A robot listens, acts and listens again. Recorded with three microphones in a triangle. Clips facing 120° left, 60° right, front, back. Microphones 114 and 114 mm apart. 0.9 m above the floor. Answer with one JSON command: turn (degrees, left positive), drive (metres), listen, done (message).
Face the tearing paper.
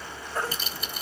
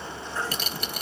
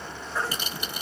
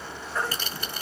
{"turn": -70}
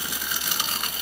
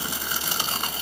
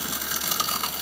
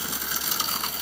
{"done": "Found it: tearing paper, straight ahead, 1 to 2 m away."}